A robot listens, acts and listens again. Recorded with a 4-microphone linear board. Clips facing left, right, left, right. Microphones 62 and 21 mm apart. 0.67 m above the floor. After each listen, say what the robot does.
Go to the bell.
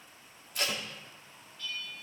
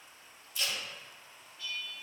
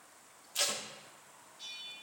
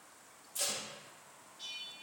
Turn 30° right.
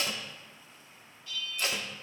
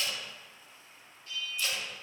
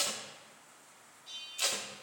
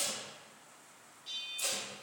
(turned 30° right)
Turn 140° right.
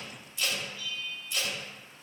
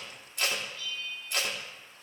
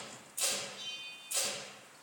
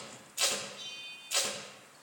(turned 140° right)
Drive 1.0 m forward.
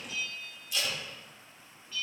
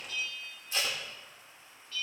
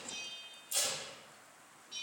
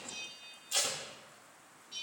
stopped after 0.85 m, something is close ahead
Turn 10° left.
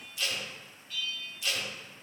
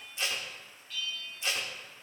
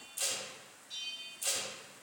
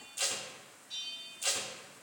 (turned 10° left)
Blocked. The bell is further on, straight ahead.